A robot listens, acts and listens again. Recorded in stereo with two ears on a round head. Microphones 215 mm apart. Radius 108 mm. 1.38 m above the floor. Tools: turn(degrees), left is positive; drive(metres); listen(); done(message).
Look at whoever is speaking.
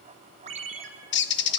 listen()
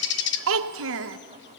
turn(degrees=-60)
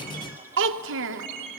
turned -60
turn(degrees=-55)
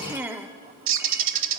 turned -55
turn(degrees=-10)
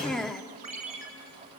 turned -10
done("Found it: a child speaking, straight ahead.")